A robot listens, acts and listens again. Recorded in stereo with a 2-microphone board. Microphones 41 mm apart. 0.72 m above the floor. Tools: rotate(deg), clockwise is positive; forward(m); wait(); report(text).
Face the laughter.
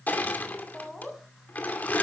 rotate(-30)
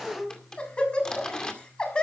rotate(-155)
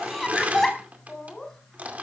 rotate(-10)
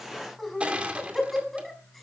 report("Found it: laughter, straight ahead.")